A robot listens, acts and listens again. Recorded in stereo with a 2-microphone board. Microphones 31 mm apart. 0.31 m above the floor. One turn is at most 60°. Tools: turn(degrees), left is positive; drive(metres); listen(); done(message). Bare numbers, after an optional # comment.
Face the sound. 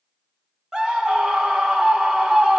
# The scream: about 25° right or 155° right.
turn(-25)
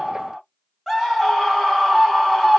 done("Facing the scream.")